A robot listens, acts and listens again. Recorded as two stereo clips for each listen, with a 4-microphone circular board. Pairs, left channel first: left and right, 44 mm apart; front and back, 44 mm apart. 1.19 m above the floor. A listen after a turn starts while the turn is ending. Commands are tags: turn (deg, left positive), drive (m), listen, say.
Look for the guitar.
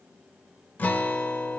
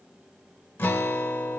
<turn deg="35"/>
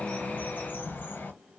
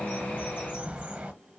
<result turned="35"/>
<listen/>
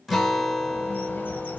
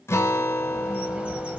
<say>Found it: a guitar, straight ahead, under 1 m away.</say>